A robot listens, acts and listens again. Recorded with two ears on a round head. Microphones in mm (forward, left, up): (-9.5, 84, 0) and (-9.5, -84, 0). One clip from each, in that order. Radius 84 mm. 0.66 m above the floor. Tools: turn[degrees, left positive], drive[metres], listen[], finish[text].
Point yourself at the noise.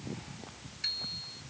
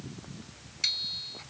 Action: turn[-90]
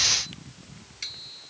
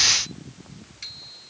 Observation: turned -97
Thought: So it is at 15° left.
Action: turn[15]
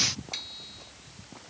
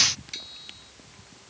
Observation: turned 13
Action: finish[Facing the bicycle bell.]